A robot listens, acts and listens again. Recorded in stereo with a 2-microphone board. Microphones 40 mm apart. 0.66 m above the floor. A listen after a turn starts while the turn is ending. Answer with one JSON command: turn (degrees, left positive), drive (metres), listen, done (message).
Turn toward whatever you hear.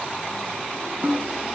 {"turn": -40}
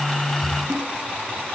{"turn": -105}
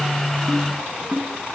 {"turn": -30}
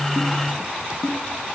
{"done": "Facing the snare drum."}